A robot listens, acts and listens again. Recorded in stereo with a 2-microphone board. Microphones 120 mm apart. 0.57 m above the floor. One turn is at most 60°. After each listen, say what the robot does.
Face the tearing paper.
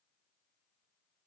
Keep listening.
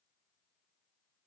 Keep listening.
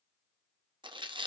Turn 45° right.
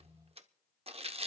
Turn 60° right.
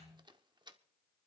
Turn 50° right.
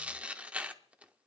Turn 15° right.
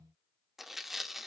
Found it: tearing paper, straight ahead.